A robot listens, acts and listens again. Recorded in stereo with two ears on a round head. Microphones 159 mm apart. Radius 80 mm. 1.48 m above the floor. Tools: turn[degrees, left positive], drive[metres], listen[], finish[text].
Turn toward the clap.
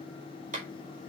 Thought: The clap: about 45° right or 135° right.
Action: turn[-45]
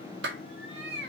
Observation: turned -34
Thought: So it is at 100° right.
Action: turn[-100]
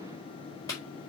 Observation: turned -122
Thought: The clap is now 20° left.
Action: turn[20]
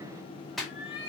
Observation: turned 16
Action: finish[Found it: a clap, straight ahead, over 4 m away.]